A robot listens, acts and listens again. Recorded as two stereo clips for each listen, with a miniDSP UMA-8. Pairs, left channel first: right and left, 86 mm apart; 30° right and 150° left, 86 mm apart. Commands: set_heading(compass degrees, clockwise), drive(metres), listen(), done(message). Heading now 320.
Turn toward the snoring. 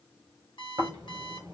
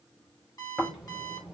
set_heading(260)
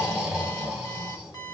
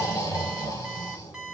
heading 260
done("Found it: snoring, straight ahead, 2 to 4 m away.")